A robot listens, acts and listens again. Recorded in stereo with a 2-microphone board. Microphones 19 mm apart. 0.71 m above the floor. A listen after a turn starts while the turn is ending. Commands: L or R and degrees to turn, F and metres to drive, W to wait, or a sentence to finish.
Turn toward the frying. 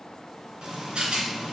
R40
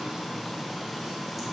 Facing the frying, 2 to 4 m away.